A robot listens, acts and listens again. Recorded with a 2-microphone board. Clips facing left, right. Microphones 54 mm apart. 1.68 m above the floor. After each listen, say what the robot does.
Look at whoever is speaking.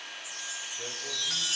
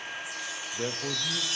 Turn 35° right.
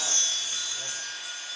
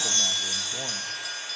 Keep listening.
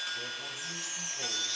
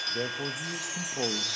Turn 110° right.
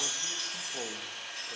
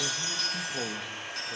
Facing the man speaking.